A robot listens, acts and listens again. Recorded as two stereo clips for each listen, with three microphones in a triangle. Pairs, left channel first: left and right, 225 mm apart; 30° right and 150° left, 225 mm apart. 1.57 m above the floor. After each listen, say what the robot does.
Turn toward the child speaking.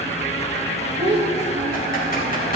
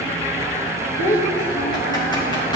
Turn 25° right.
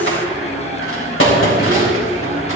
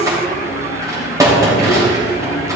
Keep listening.
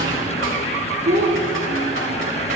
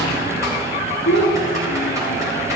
Turn 35° right.
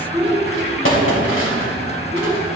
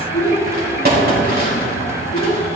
Facing the child speaking, 2 to 4 m away.